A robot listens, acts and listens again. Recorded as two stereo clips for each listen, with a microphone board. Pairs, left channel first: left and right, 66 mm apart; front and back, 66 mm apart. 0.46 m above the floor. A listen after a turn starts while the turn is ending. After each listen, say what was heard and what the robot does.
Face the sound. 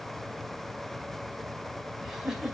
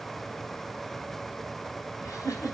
The giggle: 10° right. Turn 10° right.
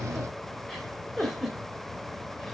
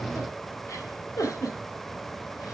Found it: a giggle, straight ahead, 2 to 4 m away.